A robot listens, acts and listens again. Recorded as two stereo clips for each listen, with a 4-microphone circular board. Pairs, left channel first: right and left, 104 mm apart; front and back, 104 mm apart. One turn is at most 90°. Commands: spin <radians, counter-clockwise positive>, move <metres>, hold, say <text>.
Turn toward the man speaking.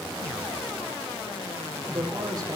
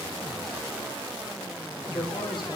spin 0.61
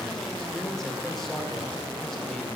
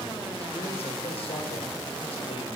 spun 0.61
hold
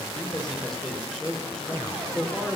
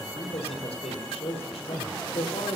say Facing the man speaking.